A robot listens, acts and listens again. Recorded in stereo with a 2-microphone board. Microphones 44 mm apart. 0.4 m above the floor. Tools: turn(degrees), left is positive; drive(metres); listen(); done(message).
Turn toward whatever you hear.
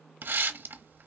turn(degrees=-50)
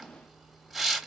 done("Found it: a hiss, straight ahead, under 1 m away.")